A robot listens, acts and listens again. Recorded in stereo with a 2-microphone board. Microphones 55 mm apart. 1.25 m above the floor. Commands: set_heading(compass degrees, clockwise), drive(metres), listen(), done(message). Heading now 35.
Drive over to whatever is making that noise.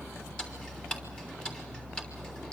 set_heading(15)
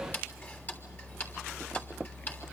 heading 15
set_heading(235)
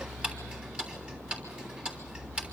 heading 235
set_heading(255)
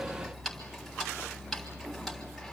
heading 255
drive(1.0)
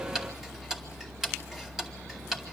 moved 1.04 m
set_heading(265)
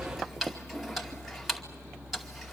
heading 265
drive(1.0)
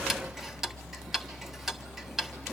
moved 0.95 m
drive(1.0)
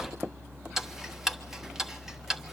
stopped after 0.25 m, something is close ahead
set_heading(275)
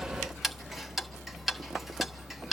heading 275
done("Arrived at the ticking, straight ahead.")